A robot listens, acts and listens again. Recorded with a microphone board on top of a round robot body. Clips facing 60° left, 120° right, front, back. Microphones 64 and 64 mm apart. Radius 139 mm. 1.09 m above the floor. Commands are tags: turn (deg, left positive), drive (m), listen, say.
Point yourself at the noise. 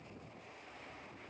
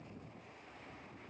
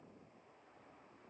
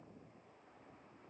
<listen/>
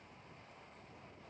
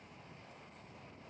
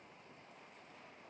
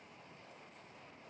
<listen/>
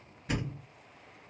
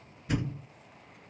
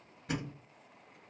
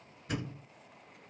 <turn deg="20"/>
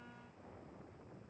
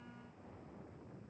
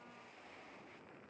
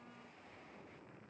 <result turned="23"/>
<say>Facing where the thud came from. I can't hear it now.</say>